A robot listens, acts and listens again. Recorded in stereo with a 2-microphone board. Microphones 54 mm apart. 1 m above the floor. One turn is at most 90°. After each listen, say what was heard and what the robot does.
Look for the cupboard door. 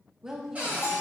The cupboard door: about 30° right or 150° right. Turn 30° right.
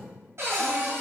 So it is at 120° right. Turn 90° right.
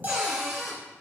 The cupboard door is now 60° right. Turn 60° right.
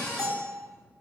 The cupboard door is now 20° left. Turn 20° left.
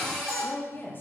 Facing the cupboard door, 1 to 2 m away.